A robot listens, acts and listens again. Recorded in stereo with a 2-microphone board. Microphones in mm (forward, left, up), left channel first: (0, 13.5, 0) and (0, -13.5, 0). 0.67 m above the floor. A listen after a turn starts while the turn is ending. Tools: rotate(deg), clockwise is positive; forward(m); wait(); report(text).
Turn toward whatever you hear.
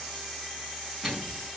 rotate(-30)
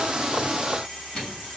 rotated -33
rotate(-150)
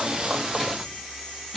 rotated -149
report("Facing the microwave.")